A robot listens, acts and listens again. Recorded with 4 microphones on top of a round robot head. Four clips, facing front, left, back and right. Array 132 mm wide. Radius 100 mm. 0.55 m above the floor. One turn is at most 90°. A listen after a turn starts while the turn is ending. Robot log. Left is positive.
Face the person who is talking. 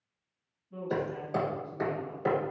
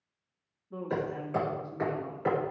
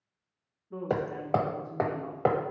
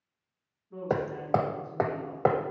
note: The woman speaking: 160° left.
cmd yaw +90
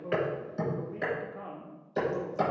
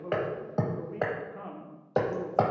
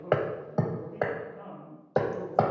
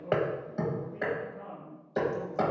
note: The woman speaking is now 65° left.
cmd yaw +65
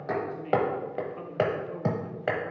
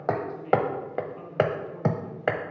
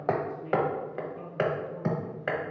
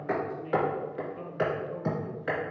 end: Facing the woman speaking, 1 to 2 m away.